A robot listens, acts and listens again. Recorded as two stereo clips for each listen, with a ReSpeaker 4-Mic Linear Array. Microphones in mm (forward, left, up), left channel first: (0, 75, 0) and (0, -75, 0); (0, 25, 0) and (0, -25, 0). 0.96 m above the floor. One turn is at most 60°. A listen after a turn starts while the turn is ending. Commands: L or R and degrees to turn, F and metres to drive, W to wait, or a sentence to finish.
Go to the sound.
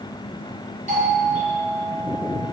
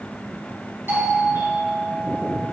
R55
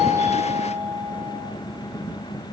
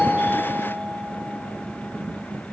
F1.0
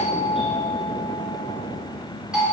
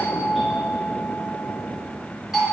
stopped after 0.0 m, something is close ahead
Blocked. The doorbell is further on, straight ahead.